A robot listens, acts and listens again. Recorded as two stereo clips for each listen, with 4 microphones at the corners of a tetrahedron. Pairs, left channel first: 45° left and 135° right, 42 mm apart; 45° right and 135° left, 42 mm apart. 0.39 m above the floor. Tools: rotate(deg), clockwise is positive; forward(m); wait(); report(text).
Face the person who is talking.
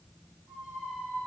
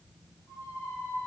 wait()
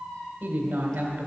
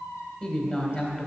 rotate(105)
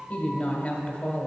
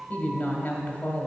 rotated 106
report("Facing the woman speaking.")